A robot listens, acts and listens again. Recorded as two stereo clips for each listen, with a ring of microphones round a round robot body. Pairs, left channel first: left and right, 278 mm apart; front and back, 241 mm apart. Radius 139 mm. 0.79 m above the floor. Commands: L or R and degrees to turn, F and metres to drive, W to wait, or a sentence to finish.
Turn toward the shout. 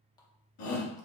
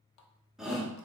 L90
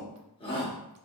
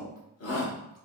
L15
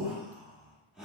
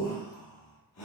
Facing the shout.